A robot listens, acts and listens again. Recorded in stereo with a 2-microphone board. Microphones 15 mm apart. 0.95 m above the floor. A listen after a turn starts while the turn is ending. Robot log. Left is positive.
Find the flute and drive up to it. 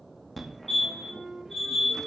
note: The flute: about 35° right or 145° right.
cmd yaw -35
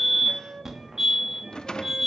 note: So it is at 110° right.
cmd yaw -110
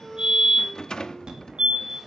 cmd idle
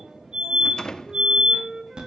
note: The flute is now 35° right.
cmd yaw -35
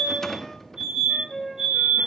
cmd fwd 1.0
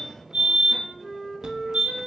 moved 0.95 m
note: The flute is now 10° right.
cmd yaw -10
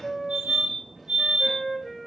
cmd fwd 1.0
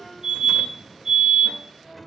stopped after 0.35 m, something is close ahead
end: I am next to the flute.